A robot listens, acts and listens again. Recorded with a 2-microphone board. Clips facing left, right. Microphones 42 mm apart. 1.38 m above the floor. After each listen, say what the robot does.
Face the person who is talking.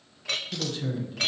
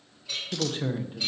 Turn 35° right.
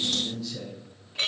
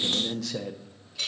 Turn 110° right.
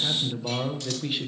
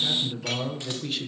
Turn 10° left.
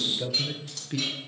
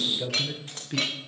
Facing the man speaking.